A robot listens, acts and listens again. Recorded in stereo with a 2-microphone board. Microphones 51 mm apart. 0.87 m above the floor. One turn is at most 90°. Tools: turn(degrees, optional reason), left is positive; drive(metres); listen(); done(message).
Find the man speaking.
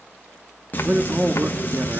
turn(degrees=-45, reason="The man speaking: about 45° right or 135° right.")
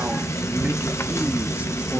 listen()
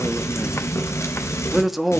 done("Facing the man speaking, 1 to 2 m away.")